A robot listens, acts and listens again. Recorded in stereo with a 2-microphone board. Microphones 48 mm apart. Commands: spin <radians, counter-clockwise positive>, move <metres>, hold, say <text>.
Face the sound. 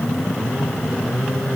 hold
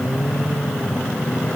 hold
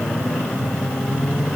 say I can't make out anything.